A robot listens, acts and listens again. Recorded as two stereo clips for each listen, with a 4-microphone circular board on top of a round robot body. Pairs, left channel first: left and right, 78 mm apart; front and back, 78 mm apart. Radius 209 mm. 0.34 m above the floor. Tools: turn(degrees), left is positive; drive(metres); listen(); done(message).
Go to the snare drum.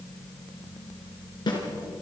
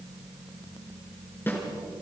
turn(degrees=65)
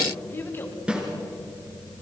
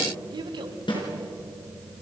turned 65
turn(degrees=-15)
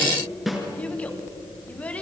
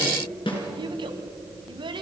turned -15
drive(metres=1.0)
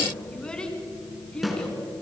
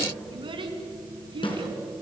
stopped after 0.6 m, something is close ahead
done("Something is in my way. I am facing the snare drum but have not reached it.")